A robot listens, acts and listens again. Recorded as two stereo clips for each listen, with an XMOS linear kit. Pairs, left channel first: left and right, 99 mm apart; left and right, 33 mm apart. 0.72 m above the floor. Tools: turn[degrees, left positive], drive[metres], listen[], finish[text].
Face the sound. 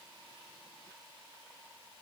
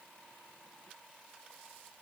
Action: listen[]
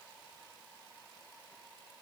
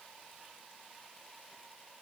Action: listen[]
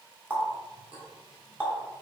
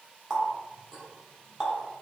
Thought: The running tap: about 15° right or 165° right.
Action: turn[-15]
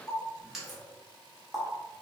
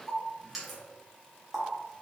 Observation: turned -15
Action: finish[Found it: a running tap, straight ahead.]